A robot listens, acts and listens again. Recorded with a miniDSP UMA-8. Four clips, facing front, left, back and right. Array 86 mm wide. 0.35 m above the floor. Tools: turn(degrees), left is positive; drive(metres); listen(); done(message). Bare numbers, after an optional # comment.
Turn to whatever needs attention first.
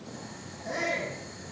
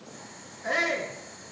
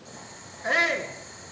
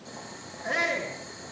# The shout: straight behind.
turn(180)
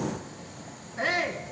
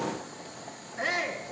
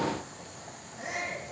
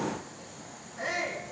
# The shout is now 30° left.
turn(30)
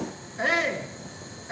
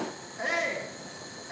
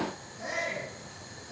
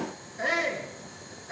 done("Found it: a shout, straight ahead, 2 to 4 m away.")